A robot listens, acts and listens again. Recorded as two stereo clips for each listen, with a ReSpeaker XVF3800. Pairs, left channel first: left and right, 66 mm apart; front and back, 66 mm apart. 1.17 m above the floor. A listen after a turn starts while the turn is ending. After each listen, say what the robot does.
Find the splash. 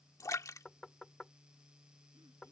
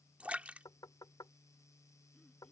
Turn 115° left.
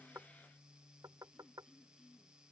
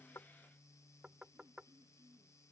I heard a splash from this way, but can't make it out now.